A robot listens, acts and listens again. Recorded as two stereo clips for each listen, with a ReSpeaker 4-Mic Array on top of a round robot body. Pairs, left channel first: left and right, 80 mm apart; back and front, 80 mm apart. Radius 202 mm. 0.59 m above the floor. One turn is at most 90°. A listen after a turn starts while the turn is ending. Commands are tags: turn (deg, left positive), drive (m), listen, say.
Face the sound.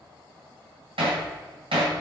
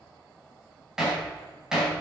<turn deg="-85"/>
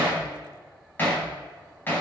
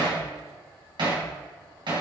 <turn deg="25"/>
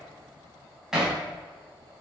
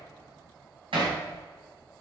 <say>Facing the hammering, over 4 m away.</say>